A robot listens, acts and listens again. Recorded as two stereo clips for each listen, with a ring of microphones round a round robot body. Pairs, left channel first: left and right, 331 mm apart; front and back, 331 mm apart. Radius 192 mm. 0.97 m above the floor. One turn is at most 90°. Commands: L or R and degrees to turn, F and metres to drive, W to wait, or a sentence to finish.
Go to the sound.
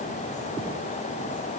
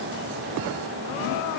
W
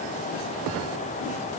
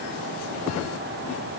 W
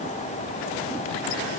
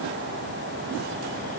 I can't make out anything.